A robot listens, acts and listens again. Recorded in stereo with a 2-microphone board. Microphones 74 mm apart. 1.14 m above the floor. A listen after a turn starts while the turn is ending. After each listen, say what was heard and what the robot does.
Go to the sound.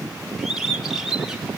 Turn 30° right.
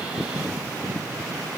Keep listening.
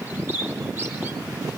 So it is at 145° right. Turn 145° right.
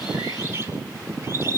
The bird is now 35° right. Turn 35° right.
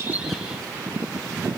Keep listening.
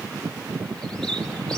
Keep listening.
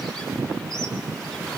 I heard a bird from this way, but can't make it out now. I did not reach it.